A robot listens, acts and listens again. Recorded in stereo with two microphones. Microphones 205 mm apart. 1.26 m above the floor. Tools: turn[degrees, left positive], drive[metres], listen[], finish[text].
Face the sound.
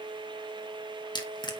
Thought: The crushing: about 20° left or 160° left.
Action: turn[20]
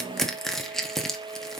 Action: finish[Facing the crushing.]